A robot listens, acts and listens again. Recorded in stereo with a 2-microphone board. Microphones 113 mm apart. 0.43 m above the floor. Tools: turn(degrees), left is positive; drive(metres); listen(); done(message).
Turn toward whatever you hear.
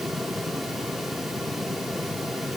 listen()
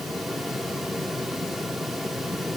listen()
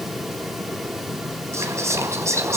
turn(degrees=-25)
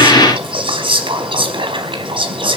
turn(degrees=-130)
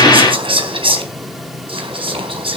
turn(degrees=-55)
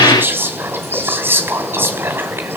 turn(degrees=-20)
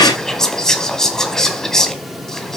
done("Found it: whispering, straight ahead.")